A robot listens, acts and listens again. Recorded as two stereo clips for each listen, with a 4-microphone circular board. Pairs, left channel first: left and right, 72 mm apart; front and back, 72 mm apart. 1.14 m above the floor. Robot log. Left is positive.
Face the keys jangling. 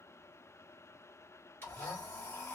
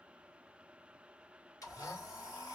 cmd idle
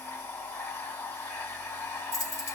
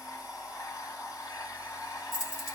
note: The keys jangling: 50° left.
cmd yaw +50
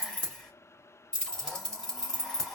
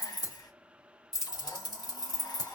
note: The keys jangling is now 10° left.
cmd yaw +10
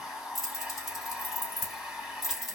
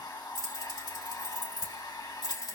end: Found it: keys jangling, straight ahead, 2 to 4 m away.